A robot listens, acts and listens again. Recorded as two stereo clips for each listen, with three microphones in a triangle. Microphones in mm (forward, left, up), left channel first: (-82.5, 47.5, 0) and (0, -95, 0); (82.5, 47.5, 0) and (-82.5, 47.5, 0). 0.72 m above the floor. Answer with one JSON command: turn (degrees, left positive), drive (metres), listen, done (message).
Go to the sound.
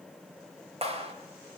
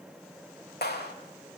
{"turn": -10}
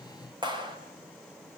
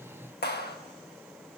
{"drive": 1.0}
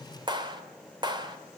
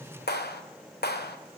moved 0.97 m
{"drive": 1.0}
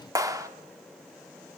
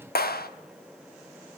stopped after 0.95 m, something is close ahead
{"turn": 10}
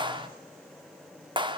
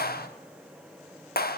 {"done": "I am next to the clap."}